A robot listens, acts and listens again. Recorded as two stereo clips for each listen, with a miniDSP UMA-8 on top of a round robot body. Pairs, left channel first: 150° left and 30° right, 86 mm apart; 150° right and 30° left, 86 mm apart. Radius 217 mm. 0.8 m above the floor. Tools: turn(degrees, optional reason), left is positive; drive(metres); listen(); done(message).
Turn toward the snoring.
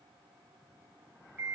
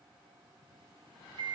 listen()
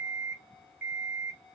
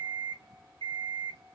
listen()
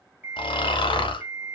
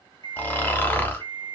turn(degrees=140, reason="The snoring: 140° left.")
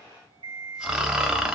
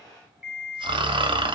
turn(degrees=50, reason="The snoring is now 50° left.")
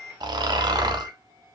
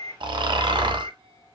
done("Found it: snoring, straight ahead.")